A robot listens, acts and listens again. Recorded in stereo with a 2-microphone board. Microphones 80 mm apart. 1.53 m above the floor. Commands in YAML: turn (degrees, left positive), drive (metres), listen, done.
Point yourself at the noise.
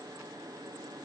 listen: true
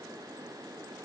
listen: true
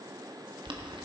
turn: -90
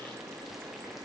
listen: true
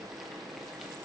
listen: true
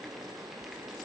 done: "I heard boiling from this way, but can't make it out now."